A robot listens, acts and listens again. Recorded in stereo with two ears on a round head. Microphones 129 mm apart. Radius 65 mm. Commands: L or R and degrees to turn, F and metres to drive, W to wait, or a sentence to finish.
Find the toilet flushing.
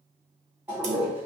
R30
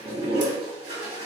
R140
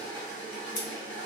L15
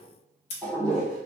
Found it: a toilet flushing, straight ahead.